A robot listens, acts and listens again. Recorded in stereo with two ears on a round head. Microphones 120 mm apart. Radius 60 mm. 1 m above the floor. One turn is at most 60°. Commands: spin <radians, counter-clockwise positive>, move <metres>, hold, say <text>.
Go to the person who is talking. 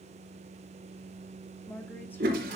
spin 0.26
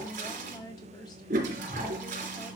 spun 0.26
spin 1.05
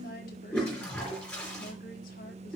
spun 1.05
spin 1.05
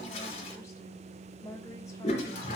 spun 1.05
spin 0.44
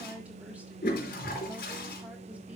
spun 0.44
spin -0.17
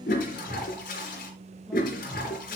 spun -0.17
hold
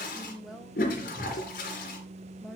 move 1.0
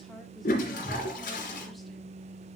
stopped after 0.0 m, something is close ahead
hold
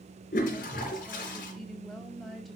say Something is in my way. I am facing the woman speaking but have not reached it.